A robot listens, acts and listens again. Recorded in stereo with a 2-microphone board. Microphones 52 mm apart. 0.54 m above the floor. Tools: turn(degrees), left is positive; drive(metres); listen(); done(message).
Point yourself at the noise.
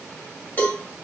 turn(degrees=35)
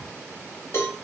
turn(degrees=105)
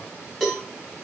done("Found it: a cowbell, straight ahead.")